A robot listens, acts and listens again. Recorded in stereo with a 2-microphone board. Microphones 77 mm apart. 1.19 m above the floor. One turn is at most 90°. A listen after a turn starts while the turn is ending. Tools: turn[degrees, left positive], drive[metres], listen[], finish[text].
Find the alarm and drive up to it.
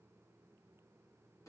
Action: listen[]
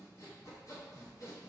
Action: listen[]
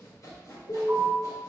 Thought: The alarm: about 55° left or 125° left.
Action: turn[55]
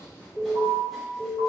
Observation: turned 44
Thought: So it is at 70° left.
Action: turn[70]
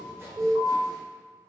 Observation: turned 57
Thought: The alarm is now 15° left.
Action: turn[15]
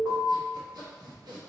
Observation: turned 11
Action: drive[1.0]
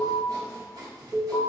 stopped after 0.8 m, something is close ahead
Action: finish[I am next to the alarm.]